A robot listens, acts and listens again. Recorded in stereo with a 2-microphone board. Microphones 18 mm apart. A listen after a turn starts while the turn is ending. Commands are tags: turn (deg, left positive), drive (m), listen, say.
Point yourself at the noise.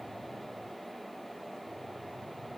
<listen/>
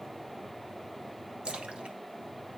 <turn deg="-70"/>
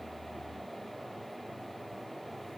<listen/>
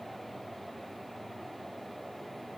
<say>I heard a splash, but can't make it out now. It was about straight ahead or 40° right.</say>